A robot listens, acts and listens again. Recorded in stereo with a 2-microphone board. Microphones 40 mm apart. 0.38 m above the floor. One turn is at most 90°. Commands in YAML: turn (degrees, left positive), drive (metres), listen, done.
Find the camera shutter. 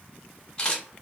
turn: 25
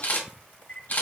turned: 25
turn: 90
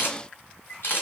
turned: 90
turn: 70
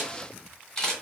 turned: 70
turn: 15
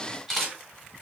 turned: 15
done: "Found it: a camera shutter, straight ahead."